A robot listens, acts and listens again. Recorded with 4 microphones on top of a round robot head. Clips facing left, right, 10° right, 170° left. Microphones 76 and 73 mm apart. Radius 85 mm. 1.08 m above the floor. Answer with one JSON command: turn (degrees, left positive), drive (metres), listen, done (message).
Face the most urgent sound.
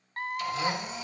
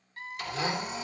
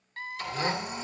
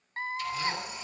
{"turn": 115}
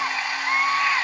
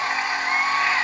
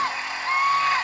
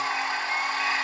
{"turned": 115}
{"turn": 10}
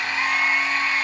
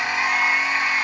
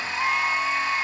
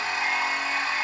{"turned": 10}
{"listen": true}
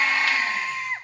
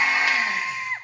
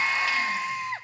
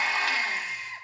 {"done": "Found it: a scream, straight ahead, 1 to 2 m away."}